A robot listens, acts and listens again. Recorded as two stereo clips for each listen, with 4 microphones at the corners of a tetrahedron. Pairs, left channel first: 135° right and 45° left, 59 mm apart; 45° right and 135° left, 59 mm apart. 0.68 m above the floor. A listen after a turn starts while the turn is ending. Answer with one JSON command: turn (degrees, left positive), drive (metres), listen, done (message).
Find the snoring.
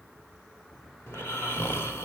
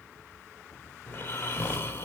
{"turn": -95}
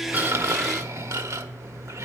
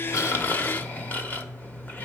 {"turn": 15}
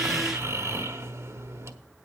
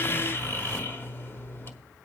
{"done": "Found it: snoring, straight ahead."}